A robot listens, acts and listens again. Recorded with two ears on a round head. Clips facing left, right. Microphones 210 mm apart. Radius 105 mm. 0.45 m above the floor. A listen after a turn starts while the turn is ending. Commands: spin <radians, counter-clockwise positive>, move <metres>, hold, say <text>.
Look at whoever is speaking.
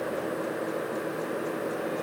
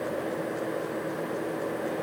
hold
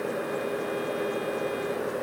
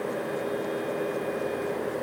hold
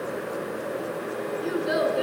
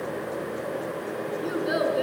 spin 0.52
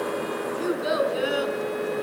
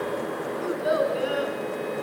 spin 2.53
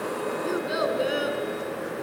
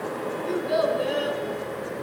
spin 0.35
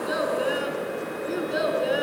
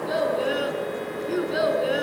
say Found it: a child speaking, straight ahead, over 4 m away.